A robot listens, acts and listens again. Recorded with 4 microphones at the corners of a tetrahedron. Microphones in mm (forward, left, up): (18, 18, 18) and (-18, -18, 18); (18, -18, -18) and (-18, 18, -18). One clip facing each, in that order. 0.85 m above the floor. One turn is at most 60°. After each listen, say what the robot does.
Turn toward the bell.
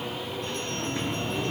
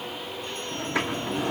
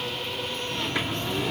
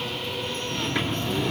Keep listening.
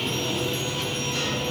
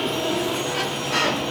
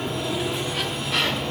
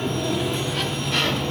Keep listening.
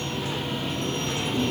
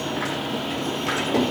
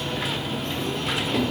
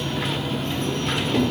I can't make out a bell, only a sliding door.